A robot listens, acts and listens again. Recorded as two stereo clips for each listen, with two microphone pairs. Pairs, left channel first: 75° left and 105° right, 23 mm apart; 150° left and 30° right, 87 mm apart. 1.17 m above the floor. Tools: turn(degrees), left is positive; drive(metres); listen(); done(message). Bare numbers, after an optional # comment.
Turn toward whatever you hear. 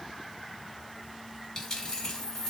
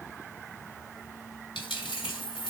# The dropped coin: 135° left.
turn(135)
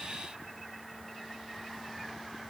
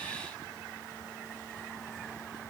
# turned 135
done("I heard a dropped coin from this way, but can't make it out now.")